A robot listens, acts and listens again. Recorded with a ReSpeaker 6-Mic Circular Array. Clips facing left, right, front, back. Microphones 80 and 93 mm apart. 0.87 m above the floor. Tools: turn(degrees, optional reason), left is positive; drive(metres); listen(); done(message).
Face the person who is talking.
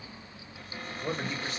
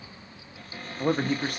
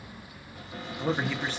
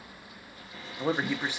turn(degrees=-105, reason="The man speaking: 105° right.")
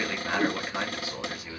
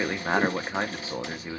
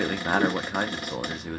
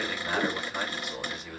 turn(degrees=-35, reason="The man speaking is now 35° right.")
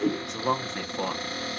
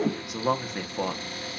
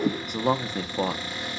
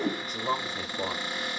done("Found it: a man speaking, straight ahead, under 1 m away.")